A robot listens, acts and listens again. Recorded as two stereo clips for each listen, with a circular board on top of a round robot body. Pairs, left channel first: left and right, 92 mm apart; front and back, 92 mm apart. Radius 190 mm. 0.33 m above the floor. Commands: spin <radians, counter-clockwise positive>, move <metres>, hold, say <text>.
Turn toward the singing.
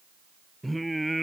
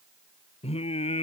say Found it: singing, straight ahead.